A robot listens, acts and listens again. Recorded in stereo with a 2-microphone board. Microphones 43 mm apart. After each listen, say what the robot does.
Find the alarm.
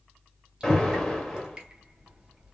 Turn 30° left.
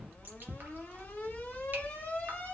Turn 140° left.
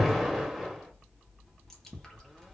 Found it: an alarm, straight ahead.